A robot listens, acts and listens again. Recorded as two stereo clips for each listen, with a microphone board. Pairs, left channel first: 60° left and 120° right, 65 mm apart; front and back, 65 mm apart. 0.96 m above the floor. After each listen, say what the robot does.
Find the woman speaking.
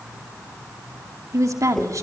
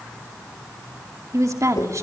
Turn 150° right.
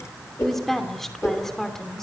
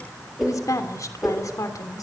Turn 25° right.
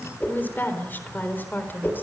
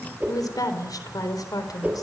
Facing the woman speaking, 2 to 4 m away.